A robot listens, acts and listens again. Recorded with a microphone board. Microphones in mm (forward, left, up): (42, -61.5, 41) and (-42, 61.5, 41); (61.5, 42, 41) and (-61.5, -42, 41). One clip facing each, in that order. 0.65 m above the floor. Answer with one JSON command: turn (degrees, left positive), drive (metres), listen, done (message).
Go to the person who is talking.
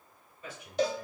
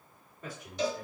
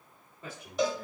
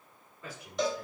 {"turn": 95}
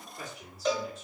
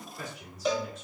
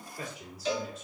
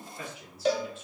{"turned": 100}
{"drive": 1.0}
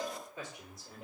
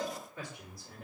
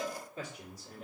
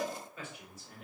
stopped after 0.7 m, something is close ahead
{"done": "I am next to the man speaking."}